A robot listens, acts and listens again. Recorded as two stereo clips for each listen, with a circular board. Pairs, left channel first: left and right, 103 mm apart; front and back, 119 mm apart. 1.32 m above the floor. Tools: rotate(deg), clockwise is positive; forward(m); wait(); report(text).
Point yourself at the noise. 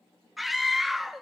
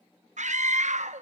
rotate(-180)
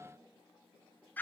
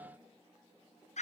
rotate(-15)
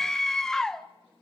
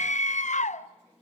report("Facing the scream, under 1 m away.")